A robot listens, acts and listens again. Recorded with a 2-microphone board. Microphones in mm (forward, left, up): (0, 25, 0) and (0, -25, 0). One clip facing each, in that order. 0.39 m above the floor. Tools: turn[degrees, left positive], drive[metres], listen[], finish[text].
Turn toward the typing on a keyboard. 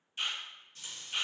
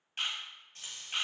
Action: listen[]
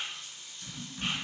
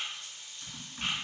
Thought: The typing on a keyboard: about 35° right or 145° right.
Action: turn[-35]
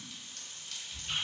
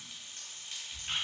Thought: So it is at 110° right.
Action: turn[-110]
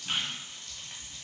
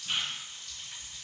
Action: listen[]
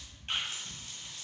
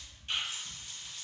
Action: finish[Found it: typing on a keyboard, straight ahead.]